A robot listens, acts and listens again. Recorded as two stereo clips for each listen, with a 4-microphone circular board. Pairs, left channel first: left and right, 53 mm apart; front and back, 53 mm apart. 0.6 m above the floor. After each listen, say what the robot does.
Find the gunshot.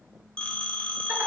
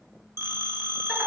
Keep listening.
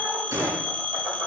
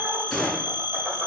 Turn 95° right.
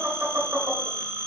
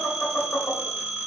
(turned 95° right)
I heard a gunshot from this way, but can't make it out now.